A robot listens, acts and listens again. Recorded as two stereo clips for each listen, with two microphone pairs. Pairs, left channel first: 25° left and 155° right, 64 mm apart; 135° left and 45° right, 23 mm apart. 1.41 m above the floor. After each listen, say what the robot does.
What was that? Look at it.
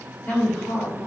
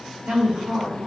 Turn 30° right.
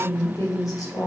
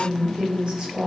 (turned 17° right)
Found it: a woman speaking, straight ahead.